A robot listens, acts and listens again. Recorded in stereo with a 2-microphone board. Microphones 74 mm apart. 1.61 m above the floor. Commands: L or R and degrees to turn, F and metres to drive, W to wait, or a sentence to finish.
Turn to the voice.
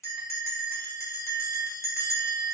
W
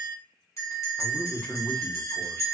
L15
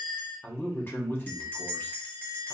L150
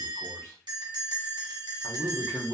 L40
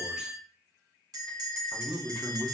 Found it: a man speaking, straight ahead, under 1 m away.